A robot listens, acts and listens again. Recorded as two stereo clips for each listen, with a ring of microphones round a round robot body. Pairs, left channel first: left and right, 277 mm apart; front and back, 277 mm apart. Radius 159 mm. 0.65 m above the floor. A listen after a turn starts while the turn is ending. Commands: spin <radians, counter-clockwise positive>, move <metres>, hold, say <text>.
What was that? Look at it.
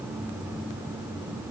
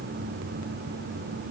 hold
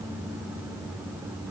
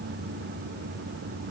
hold
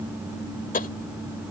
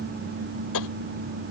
spin 0.52
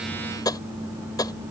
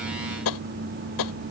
spin 0.17
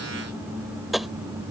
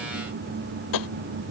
say Facing the tapping.